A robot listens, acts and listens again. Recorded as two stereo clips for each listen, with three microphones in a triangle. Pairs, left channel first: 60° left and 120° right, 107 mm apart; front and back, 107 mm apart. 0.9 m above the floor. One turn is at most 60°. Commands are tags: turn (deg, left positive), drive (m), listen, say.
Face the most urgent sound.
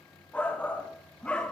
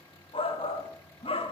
<turn deg="-20"/>
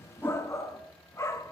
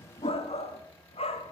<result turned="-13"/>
<say>Facing the shout.</say>